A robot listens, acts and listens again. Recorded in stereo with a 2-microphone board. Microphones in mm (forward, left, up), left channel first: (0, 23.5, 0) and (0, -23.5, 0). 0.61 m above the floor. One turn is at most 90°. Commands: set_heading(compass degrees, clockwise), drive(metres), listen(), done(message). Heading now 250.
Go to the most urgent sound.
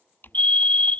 set_heading(220)
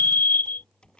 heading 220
set_heading(130)
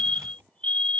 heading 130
set_heading(100)
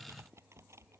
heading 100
listen()
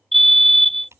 drive(1.0)
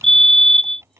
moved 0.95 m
set_heading(85)
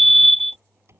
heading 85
drive(1.0)
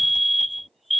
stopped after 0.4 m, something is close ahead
done("I am next to the fire alarm.")